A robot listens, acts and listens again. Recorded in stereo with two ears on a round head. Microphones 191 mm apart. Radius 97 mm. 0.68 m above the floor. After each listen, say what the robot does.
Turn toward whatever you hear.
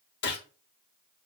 Turn 50° left.
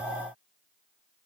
Keep listening.
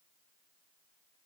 I heard a gunshot, but can't make it out now. It was about straight ahead or 80° left.